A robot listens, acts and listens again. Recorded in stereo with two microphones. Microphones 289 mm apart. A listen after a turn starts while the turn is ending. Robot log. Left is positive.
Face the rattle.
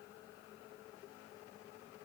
cmd idle
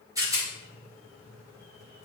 cmd yaw -30
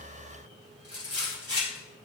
note: So it is at 135° right.
cmd yaw -135
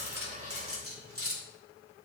note: The rattle is now 40° right.
cmd yaw -40
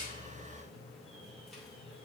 cmd idle
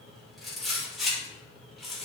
end: Facing the rattle, 2 to 4 m away.